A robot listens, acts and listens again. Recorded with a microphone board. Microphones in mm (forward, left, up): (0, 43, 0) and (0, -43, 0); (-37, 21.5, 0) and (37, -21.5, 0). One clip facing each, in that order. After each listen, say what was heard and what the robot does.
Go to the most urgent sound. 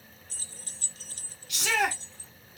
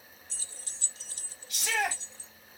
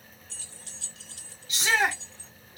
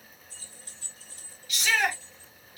The shout: 85° left. Turn 85° left.
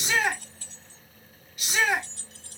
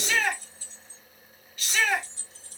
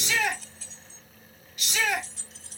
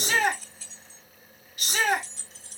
The shout is now 10° left. Turn 10° left.
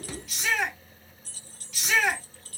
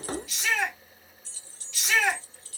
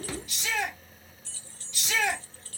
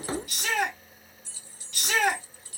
Drive 1.0 m forward.
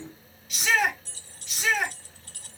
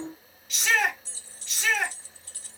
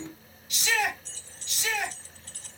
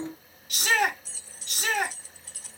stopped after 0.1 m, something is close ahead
Blocked. The shout is further on, straight ahead.